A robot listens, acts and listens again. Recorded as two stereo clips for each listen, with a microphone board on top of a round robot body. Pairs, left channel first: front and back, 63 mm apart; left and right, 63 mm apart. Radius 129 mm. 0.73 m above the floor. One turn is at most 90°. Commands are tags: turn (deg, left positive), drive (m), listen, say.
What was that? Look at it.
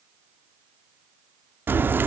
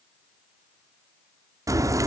<turn deg="-90"/>
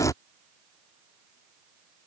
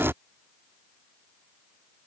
<turn deg="-35"/>
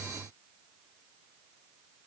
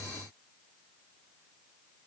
<say>Facing where the crack came from. I can't hear it now.</say>